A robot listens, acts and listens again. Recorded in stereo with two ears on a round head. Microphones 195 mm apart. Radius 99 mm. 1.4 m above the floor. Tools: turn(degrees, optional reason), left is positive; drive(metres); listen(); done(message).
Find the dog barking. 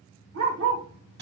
turn(degrees=-65, reason="The dog barking: about 65° right or 115° right.")
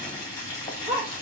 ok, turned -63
turn(degrees=-35, reason="So it is at 35° right.")
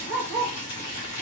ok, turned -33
done("Found it: a dog barking, straight ahead.")